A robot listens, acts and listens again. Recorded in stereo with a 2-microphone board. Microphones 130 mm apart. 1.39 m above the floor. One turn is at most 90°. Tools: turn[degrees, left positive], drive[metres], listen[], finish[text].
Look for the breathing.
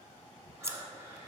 Thought: The breathing: about 20° right or 160° right.
Action: turn[-20]
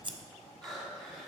Action: finish[Found it: breathing, straight ahead, 2 to 4 m away.]